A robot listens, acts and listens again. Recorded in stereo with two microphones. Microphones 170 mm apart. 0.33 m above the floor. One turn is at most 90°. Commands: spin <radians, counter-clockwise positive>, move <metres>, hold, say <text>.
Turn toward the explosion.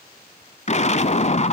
spin 0.70
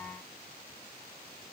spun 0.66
hold
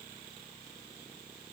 say I heard an explosion, but can't make it out now. It was about 5° left or 100° left.